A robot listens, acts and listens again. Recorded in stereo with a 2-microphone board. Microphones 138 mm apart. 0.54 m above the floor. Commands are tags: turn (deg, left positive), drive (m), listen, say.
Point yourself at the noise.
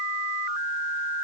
<listen/>
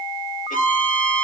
<turn deg="90"/>
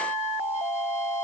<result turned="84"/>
<listen/>
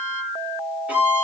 <turn deg="-10"/>
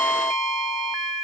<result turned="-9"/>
<say>Facing the violin, over 4 m away.</say>